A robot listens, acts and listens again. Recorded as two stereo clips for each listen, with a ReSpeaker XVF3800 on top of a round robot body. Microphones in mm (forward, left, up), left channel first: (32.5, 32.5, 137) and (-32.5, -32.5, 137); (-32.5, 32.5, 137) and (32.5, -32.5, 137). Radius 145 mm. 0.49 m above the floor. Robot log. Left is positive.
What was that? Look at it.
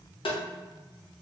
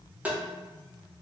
note: The tapping: 30° left.
cmd yaw +30
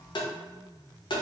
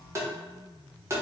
note: The tapping is now 15° left.
cmd yaw +15
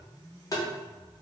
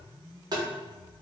end: Facing the tapping, under 1 m away.